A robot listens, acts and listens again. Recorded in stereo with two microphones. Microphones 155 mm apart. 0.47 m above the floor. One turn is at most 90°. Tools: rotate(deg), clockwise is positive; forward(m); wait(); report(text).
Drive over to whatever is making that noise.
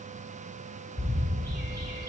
rotate(-70)
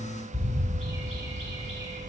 rotate(-40)
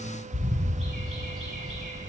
forward(1.0)
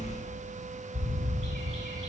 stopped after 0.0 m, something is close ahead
report("Blocked. The bird is further on, straight ahead.")